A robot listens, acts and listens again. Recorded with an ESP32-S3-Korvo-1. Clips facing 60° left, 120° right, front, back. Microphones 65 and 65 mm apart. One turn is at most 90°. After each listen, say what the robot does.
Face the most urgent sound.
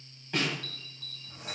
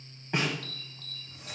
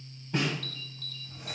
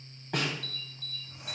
Turn 90° right.
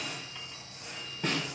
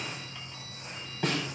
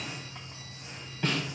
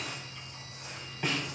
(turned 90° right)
Turn 25° right.
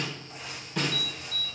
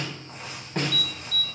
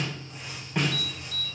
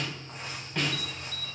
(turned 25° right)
Turn 10° right.
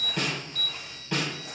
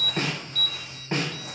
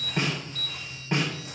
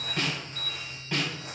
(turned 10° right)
Found it: an alarm, straight ahead.